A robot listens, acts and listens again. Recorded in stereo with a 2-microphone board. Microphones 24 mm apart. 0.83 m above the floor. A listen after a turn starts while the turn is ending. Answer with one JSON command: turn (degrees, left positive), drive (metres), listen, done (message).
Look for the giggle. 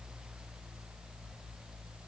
{"listen": true}
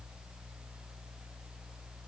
{"listen": true}
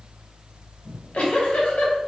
{"turn": 70}
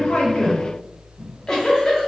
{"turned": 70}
{"turn": 30}
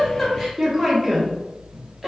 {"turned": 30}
{"turn": -15}
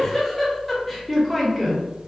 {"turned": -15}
{"done": "Found it: a giggle, straight ahead, 1 to 2 m away."}